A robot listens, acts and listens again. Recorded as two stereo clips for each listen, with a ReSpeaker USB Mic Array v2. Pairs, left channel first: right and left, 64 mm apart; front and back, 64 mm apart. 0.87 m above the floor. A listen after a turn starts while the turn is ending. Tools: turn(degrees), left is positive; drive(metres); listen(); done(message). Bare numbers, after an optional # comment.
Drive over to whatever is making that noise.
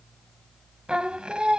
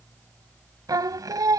# The singing: 165° left.
turn(165)
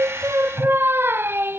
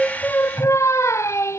# The singing is now 40° left.
turn(40)
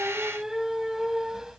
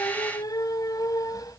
# The singing is now 10° left.
turn(10)
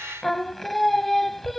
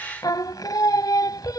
drive(1.0)
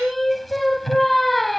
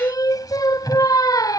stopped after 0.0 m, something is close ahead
done("Blocked. The singing is further on, straight ahead.")